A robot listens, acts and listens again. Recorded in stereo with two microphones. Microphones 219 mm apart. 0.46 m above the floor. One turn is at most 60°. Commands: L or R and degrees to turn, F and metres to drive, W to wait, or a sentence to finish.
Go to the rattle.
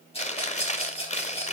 L25
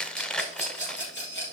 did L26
L60
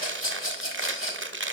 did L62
L60
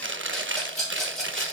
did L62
F1.0
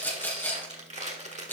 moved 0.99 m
L10
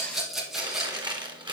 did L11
F1.0
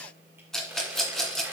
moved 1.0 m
F1.0
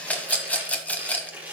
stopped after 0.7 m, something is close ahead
I am next to the rattle.